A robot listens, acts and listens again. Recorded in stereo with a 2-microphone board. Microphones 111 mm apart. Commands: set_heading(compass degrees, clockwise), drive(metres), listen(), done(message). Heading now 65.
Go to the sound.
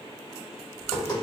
set_heading(30)
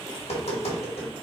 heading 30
set_heading(280)
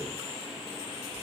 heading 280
listen()
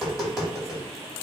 drive(1.0)
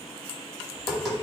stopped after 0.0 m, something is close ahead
done("Something is in my way. I am facing the tapping but have not reached it.")